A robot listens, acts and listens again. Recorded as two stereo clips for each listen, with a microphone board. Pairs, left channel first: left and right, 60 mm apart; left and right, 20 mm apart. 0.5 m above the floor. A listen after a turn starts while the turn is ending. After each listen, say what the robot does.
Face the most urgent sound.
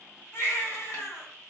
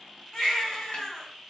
Turn 50° left.
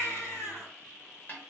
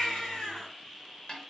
Turn 70° left.
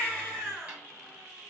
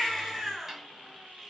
Found it: a baby crying, straight ahead.